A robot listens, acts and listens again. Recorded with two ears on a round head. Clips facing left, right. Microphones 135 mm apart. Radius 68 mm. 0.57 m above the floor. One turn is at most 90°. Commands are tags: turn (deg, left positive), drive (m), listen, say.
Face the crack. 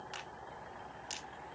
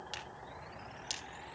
<turn deg="-45"/>
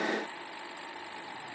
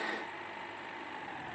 <listen/>
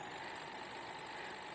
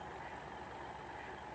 <say>I heard a crack, but can't make it out now. It was about straight ahead or 90° right.</say>